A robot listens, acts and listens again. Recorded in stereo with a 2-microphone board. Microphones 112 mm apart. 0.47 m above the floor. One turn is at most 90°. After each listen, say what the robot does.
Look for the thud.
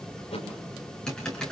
Turn 70° left.
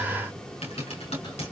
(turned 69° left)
Keep listening.
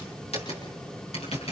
I heard a thud, but can't make it out now. It was about straight ahead or 40° left.